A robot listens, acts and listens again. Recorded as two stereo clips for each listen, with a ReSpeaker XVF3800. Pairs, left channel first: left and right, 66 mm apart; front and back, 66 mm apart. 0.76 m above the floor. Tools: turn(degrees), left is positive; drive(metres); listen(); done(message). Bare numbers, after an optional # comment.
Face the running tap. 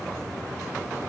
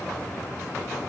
listen()
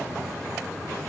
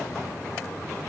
listen()
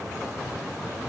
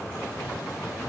done("I can't make out a running tap.")